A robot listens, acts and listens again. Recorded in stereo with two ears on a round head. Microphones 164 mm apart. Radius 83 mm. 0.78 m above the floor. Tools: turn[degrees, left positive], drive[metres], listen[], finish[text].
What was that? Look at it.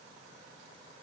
Action: listen[]
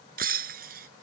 Thought: The breaking glass: about 50° right or 130° right.
Action: turn[-50]
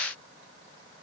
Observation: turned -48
Action: listen[]
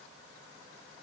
Action: finish[I heard breaking glass, but can't make it out now. It was about straight ahead or 80° right.]